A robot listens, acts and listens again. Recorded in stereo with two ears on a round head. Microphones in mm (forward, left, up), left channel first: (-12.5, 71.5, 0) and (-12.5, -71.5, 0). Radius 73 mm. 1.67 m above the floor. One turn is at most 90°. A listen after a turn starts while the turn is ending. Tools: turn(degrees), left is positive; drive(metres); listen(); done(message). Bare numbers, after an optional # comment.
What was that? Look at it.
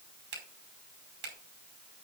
turn(-90)
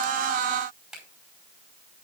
done("Facing the finger snap, over 4 m away.")